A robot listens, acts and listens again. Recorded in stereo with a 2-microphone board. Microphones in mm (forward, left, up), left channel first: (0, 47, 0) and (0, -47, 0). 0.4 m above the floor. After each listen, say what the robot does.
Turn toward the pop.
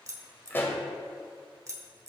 Turn 25° left.
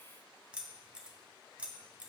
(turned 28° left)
Keep listening.
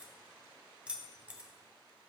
I heard a pop, but can't make it out now. It was about 5° right or 130° left.